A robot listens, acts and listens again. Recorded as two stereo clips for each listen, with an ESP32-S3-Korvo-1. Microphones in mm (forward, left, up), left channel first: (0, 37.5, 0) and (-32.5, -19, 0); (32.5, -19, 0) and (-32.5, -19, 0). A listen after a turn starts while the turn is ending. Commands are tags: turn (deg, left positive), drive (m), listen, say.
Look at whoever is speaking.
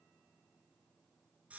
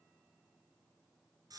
<listen/>
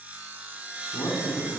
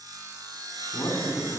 <turn deg="50"/>
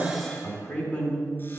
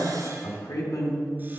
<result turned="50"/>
<say>Found it: a man speaking, straight ahead, 2 to 4 m away.</say>